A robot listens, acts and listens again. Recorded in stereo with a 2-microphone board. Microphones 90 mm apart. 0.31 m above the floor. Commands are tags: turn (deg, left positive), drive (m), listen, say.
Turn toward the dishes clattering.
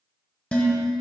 <turn deg="30"/>
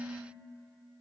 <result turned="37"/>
<listen/>
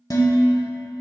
<turn deg="130"/>
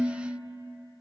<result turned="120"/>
<turn deg="10"/>
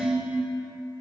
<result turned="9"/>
<say>Facing the dishes clattering.</say>